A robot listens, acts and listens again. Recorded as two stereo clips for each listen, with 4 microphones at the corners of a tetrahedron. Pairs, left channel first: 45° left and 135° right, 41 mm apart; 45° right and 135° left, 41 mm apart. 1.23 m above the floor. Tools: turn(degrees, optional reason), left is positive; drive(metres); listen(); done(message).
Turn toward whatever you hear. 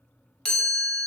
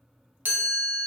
turn(degrees=115, reason="The chime: 115° left.")
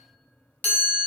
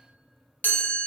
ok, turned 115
done("Found it: a chime, straight ahead, under 1 m away.")